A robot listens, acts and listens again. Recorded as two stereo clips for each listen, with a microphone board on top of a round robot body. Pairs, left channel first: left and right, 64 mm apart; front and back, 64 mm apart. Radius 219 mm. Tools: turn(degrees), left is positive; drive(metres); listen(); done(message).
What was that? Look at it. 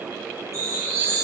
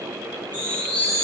turn(degrees=65)
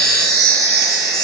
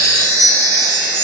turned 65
done("Facing the chime.")